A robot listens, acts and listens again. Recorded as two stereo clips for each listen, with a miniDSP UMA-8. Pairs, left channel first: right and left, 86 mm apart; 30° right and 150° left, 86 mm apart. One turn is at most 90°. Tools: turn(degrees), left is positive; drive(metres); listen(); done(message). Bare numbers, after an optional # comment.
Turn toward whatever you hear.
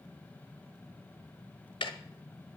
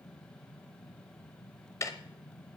# The ticking: 80° right.
turn(-80)
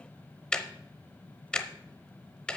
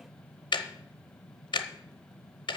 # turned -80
# The ticking is now 10° right.
turn(-10)
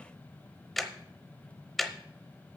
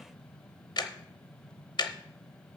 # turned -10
done("Found it: ticking, straight ahead.")